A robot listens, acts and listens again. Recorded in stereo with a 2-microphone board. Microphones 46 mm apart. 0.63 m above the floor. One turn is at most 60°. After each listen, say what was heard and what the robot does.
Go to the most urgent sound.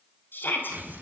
The shout: about 45° left or 135° left. Turn 45° left.
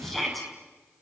Drive 1.0 m forward.
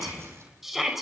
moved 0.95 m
Drive 1.0 m forward.
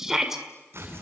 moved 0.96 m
The shout is now 10° right. Turn 10° right.
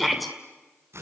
Drive 1.0 m forward.
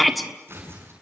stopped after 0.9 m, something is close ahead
I am next to the shout.